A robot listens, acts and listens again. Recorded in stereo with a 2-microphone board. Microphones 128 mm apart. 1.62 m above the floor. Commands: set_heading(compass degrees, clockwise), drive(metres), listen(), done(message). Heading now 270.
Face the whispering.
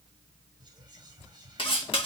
set_heading(300)
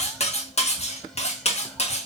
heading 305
listen()
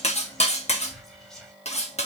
done("Found it: whispering, straight ahead, 1 to 2 m away.")